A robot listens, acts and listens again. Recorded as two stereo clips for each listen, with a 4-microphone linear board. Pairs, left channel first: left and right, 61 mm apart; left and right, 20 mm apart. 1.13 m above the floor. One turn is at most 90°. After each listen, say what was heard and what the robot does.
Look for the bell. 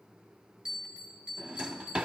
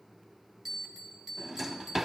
Turn 30° right.
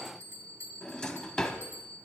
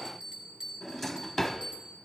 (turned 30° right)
So it is at 135° right. Turn 90° right.
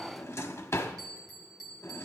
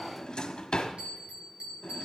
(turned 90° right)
The bell is now 95° right. Turn 90° right.
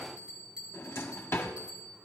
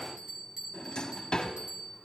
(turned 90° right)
The bell is now 20° right. Turn 20° right.
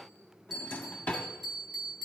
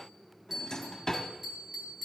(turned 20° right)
Found it: a bell, straight ahead, 2 to 4 m away.